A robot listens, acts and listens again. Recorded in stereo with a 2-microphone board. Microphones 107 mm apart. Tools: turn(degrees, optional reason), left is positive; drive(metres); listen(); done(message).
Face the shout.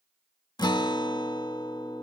listen()
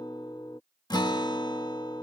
listen()
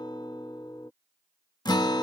done("I can't make out a shout to turn to.")